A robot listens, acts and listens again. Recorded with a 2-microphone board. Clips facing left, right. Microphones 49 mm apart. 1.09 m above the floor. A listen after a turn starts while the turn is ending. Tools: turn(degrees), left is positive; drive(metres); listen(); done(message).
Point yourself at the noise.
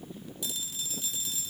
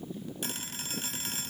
turn(degrees=-60)
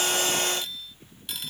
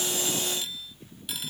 done("Facing the phone ringing.")